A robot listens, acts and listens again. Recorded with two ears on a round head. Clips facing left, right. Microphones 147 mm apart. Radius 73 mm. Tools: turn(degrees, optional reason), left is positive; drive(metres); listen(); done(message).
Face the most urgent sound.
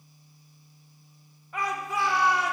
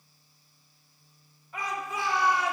turn(degrees=60, reason="The shout: about 60° left or 120° left.")
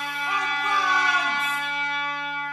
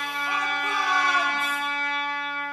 turn(degrees=55, reason="So it is at 55° left.")
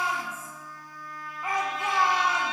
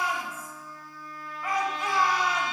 turn(degrees=20, reason="The shout is now 20° left.")
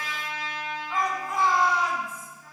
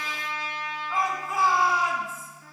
done("Facing the shout.")